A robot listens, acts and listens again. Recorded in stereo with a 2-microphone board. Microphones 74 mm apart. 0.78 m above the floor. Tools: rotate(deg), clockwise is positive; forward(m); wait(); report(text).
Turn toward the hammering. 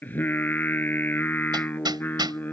rotate(90)
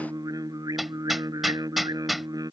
report("Found it: hammering, straight ahead.")